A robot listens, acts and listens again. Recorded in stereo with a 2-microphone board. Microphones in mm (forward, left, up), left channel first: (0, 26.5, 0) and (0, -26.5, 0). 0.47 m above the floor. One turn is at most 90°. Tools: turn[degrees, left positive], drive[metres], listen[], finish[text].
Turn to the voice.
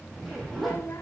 Thought: The child speaking: about 60° left or 120° left.
Action: turn[60]
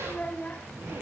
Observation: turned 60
Thought: So it is at 35° left.
Action: turn[35]
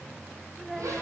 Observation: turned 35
Action: finish[Facing the child speaking, 1 to 2 m away.]